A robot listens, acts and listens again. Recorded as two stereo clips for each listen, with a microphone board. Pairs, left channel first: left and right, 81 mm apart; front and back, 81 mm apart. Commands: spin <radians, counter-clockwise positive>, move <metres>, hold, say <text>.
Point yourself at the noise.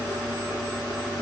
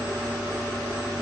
hold
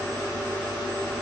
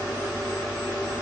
hold
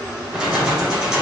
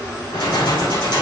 spin -0.17
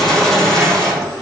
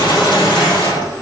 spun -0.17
say Facing the keys jangling.